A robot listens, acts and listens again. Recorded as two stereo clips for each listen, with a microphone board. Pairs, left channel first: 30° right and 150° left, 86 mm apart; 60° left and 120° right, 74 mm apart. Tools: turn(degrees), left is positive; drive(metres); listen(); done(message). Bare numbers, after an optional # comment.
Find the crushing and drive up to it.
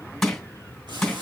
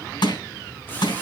# The crushing: 60° left.
turn(60)
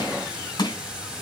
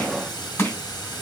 drive(1.0)
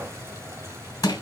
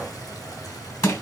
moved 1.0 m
# The crushing is now 15° left.
turn(15)
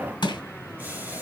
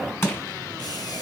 drive(1.0)
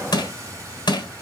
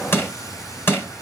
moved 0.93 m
drive(1.0)
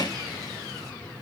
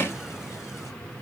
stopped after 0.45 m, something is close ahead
done("I am next to the crushing.")